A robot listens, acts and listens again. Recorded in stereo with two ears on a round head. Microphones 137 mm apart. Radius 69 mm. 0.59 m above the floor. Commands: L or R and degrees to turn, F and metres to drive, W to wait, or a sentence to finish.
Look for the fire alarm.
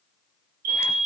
R65
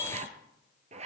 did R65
W
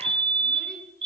R35
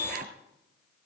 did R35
R20
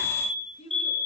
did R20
Found it: a fire alarm, straight ahead, over 4 m away.